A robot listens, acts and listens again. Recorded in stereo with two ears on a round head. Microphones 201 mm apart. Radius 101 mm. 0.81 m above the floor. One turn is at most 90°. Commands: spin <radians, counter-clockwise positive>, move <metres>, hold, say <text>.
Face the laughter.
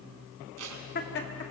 spin 0.96
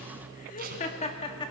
spin 0.35
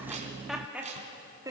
spin -0.26
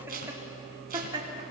spin -0.35
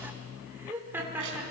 spin -0.17
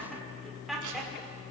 say Found it: laughter, straight ahead.